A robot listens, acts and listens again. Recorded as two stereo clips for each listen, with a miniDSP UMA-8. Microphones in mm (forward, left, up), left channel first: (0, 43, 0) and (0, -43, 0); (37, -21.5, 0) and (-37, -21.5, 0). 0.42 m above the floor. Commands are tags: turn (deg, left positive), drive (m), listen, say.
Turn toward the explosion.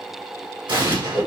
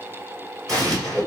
<turn deg="-80"/>
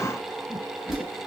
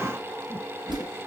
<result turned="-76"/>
<say>Facing where the explosion came from. I can't hear it now.</say>